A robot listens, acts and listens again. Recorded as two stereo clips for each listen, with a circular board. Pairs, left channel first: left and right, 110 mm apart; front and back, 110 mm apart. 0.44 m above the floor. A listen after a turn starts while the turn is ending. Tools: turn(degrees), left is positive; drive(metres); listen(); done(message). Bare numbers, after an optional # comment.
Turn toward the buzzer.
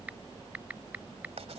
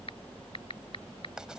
listen()
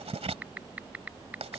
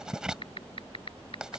listen()
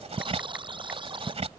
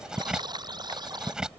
# The buzzer: 130° right.
turn(-130)
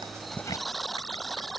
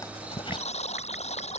done("Found it: a buzzer, straight ahead.")